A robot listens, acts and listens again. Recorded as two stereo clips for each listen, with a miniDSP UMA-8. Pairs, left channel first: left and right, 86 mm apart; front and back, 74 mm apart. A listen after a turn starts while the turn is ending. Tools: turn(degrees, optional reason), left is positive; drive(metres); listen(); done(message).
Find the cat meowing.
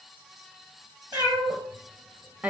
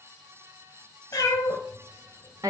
turn(degrees=-50, reason="The cat meowing: 50° right.")
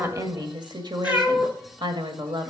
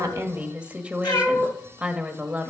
turn(degrees=-20, reason="The cat meowing is now 20° right.")
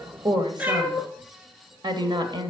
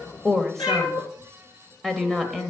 turn(degrees=-25, reason="The cat meowing is now 25° right.")
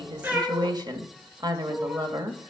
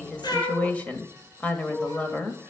turn(degrees=-15, reason="The cat meowing is now 15° right.")
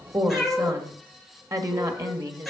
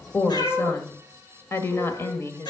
done("Found it: a cat meowing, straight ahead, 2 to 4 m away.")